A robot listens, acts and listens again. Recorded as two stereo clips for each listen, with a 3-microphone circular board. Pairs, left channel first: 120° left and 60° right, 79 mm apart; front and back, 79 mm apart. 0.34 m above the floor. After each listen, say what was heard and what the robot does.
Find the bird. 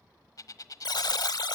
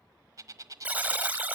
The bird: 145° left. Turn 145° left.
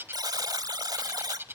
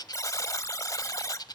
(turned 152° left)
Facing the bird, 1 to 2 m away.